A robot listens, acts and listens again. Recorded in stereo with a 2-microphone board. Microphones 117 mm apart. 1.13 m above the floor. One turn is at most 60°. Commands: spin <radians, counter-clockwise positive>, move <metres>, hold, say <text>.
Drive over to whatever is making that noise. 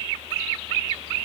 hold
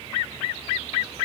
hold
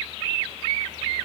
say I can't make out anything.